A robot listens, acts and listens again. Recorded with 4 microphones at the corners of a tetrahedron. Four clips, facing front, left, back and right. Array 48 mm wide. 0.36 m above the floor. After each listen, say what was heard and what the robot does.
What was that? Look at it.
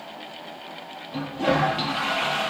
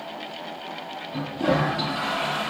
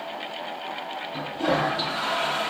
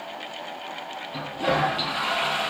The toilet flushing: 40° right. Turn 40° right.
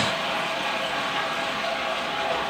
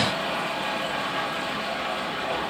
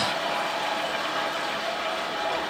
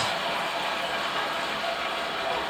Facing the toilet flushing, over 4 m away.